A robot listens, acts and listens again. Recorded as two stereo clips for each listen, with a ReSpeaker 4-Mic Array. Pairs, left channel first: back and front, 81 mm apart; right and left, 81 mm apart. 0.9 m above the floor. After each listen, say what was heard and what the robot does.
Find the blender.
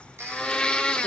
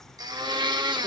The blender: 105° left. Turn 105° left.
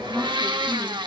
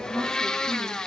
The blender is now 10° right. Turn 10° right.
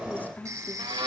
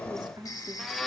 Found it: a blender, straight ahead, 1 to 2 m away.